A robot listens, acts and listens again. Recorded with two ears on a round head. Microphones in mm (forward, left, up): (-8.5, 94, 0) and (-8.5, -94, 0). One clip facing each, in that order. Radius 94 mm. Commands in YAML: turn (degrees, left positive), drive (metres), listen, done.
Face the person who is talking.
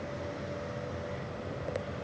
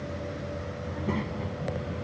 turn: -90
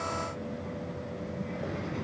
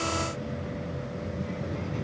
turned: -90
done: "Found it: a child speaking, straight ahead."